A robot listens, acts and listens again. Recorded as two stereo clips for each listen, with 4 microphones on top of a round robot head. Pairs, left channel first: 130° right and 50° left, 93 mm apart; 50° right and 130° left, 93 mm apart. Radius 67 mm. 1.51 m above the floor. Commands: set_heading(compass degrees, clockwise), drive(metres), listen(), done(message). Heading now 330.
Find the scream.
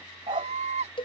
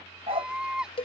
set_heading(285)
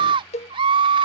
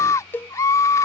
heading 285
set_heading(275)
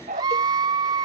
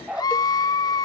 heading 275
done("Facing the scream.")